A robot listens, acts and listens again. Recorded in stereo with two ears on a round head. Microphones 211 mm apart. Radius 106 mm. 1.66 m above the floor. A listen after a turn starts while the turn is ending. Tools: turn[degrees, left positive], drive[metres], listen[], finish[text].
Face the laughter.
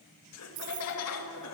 Action: turn[90]
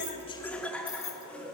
Action: finish[Facing the laughter, 2 to 4 m away.]